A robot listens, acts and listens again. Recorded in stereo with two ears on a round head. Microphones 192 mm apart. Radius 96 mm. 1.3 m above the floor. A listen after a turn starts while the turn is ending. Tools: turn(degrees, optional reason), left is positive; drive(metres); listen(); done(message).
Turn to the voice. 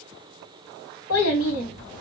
turn(degrees=65, reason="The child speaking: about 65° left or 115° left.")
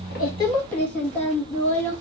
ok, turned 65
done("Found it: a child speaking, straight ahead, 1 to 2 m away.")